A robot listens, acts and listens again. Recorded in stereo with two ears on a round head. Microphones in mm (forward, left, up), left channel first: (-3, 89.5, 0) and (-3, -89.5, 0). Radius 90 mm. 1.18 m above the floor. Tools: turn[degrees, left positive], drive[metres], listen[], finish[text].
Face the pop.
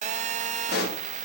Thought: The pop: about 50° left or 130° left.
Action: turn[50]
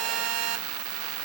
Action: listen[]
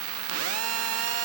Action: finish[I heard a pop, but can't make it out now. It was about straight ahead or 80° left.]